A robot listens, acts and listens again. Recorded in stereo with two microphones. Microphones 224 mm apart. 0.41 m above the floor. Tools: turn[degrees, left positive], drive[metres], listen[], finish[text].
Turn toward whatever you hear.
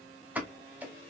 Action: turn[-30]
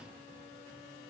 Action: listen[]
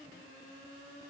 Action: finish[I heard a pop, but can't make it out now. It was about 25° left or 145° right.]